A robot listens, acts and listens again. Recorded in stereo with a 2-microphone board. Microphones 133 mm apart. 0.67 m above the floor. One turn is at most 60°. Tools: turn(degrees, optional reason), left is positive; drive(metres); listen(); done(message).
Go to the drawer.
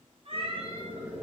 listen()
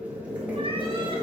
listen()
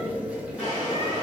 turn(degrees=40, reason="The drawer: about 40° left or 140° left.")
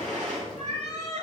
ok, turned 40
turn(degrees=60, reason="So it is at 100° left.")
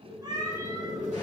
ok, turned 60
turn(degrees=40, reason="Nothing new. It was at 40° left.")
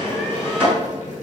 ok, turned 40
turn(degrees=15, reason="The drawer is now 15° left.")
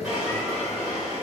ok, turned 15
drive(metres=1.0)
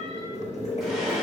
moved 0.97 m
listen()
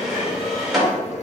drive(metres=1.0)
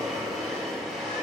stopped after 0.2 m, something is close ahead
done("I am next to the drawer.")